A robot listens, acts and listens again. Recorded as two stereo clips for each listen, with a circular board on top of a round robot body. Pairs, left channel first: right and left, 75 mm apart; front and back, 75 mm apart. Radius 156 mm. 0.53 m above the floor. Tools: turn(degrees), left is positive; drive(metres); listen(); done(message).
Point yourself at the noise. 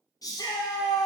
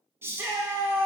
turn(degrees=-125)
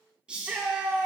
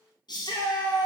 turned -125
turn(degrees=15)
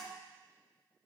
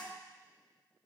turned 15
listen()
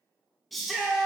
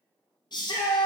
done("Facing the shout, 1 to 2 m away.")